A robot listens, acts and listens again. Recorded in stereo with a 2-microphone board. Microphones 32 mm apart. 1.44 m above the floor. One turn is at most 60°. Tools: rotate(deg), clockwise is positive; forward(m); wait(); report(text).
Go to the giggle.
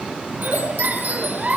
rotate(45)
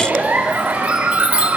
rotate(60)
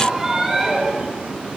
rotate(20)
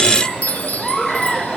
forward(1.0)
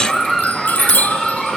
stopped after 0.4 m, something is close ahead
report("Blocked. The giggle is further on, straight ahead.")